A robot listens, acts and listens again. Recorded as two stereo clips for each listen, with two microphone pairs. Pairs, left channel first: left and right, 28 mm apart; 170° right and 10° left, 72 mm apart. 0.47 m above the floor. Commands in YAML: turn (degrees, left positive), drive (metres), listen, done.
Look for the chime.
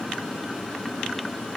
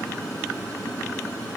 listen: true
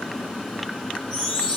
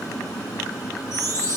turn: 40
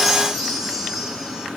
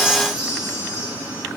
turn: 10
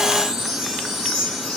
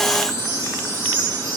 done: "Facing the chime, 2 to 4 m away."